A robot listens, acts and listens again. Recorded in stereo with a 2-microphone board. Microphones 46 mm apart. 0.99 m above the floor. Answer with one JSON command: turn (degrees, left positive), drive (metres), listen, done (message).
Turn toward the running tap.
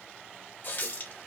{"turn": 50}
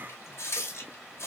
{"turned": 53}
{"turn": 80}
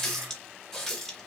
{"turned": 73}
{"done": "Facing the running tap, 1 to 2 m away."}